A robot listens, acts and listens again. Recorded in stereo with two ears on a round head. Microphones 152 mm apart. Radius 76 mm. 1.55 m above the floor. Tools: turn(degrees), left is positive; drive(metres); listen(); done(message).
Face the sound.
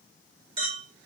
turn(degrees=-35)
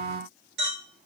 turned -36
turn(degrees=-105)
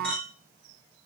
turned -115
done("Facing the clink.")